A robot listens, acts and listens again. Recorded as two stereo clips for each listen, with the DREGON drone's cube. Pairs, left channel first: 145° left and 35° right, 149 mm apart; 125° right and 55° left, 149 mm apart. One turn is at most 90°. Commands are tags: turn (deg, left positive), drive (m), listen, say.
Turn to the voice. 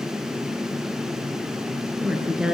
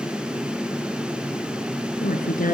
<turn deg="-90"/>
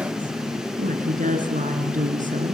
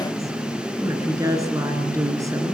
<turn deg="-10"/>
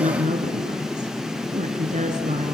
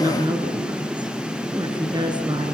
<say>Facing the woman speaking.</say>